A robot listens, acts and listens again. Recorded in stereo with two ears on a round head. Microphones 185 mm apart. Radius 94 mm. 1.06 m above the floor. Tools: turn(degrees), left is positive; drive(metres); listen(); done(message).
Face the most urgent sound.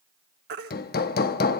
turn(degrees=-50)
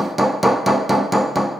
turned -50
listen()
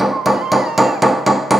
done("Facing the baby crying.")